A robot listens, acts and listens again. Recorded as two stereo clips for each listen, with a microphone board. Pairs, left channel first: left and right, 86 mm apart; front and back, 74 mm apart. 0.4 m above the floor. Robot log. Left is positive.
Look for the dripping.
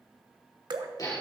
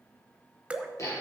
note: The dripping: 110° right.
cmd yaw -110
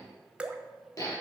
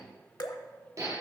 note: The dripping is now 15° right.
cmd yaw -15
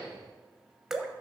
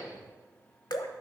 end: Found it: dripping, straight ahead.